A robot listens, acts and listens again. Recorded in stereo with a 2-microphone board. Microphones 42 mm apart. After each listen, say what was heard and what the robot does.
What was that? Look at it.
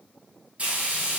The frying: about 35° right or 145° right. Turn 35° right.
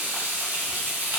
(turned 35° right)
So it is at 105° right. Turn 105° right.
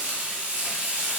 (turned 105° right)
The frying is now 40° right. Turn 40° right.
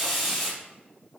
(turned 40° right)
Found it: frying, straight ahead.